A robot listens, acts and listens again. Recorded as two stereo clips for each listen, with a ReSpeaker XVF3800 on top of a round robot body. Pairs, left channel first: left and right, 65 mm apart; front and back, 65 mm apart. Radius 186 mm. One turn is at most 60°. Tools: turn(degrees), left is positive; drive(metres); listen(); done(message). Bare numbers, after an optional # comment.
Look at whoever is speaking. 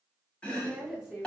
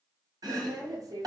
# The woman speaking: 165° right.
turn(-60)
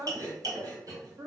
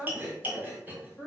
# The woman speaking is now 85° right.
turn(-60)
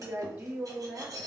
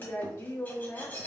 # The woman speaking is now 30° right.
turn(-30)
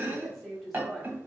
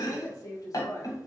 done("Facing the woman speaking, 1 to 2 m away.")